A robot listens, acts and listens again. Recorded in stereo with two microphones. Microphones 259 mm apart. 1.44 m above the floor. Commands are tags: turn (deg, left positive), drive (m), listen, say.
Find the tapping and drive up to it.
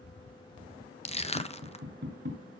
<turn deg="-45"/>
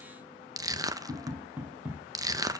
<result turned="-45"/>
<drive m="1.0"/>
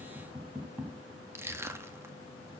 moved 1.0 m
<turn deg="-10"/>
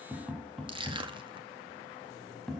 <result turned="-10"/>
<drive m="1.0"/>
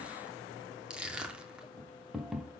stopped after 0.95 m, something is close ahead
<say>I am next to the tapping.</say>